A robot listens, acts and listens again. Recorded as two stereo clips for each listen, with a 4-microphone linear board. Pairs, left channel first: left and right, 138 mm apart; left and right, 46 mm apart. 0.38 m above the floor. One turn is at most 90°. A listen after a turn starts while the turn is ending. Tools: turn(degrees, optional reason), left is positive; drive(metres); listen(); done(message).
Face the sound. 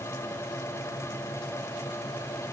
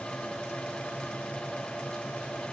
listen()
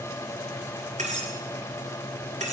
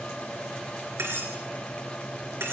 turn(degrees=-60, reason="The cutlery clinking: about 60° right or 120° right.")
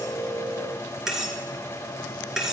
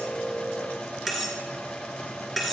done("Facing the cutlery clinking.")